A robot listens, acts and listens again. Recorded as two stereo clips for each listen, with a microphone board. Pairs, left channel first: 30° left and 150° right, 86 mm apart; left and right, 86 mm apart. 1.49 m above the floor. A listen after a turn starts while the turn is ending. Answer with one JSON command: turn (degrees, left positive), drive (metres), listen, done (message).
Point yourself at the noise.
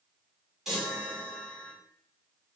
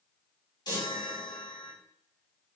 {"turn": 125}
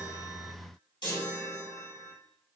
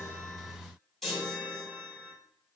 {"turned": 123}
{"done": "Facing the chime."}